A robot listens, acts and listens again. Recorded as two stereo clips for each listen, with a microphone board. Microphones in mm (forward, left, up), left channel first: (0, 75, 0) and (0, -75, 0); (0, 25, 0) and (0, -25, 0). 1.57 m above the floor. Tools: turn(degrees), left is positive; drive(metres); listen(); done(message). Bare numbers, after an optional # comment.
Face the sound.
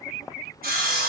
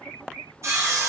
turn(-90)
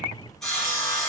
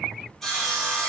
done("Found it: sawing, straight ahead, over 4 m away.")